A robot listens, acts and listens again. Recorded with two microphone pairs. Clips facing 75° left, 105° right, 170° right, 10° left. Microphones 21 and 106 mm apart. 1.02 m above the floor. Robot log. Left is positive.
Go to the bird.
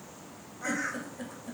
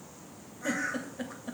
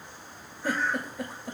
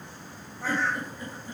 cmd fwd 1.0
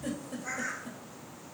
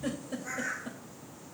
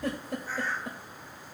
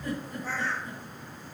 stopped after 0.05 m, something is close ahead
end: Something is in my way. I am facing the bird but have not reached it.